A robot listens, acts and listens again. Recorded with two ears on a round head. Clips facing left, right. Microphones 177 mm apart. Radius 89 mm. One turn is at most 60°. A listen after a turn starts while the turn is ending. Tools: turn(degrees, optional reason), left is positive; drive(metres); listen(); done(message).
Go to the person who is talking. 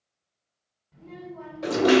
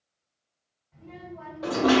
turn(degrees=45, reason="The child speaking: about 45° left or 135° left.")
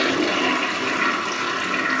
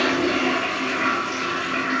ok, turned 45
listen()
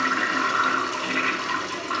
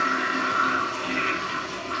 listen()
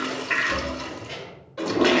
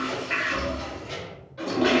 drive(metres=1.0)
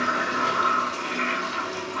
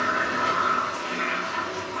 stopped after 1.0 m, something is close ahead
listen()
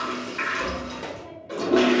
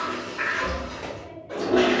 done("I am next to the child speaking.")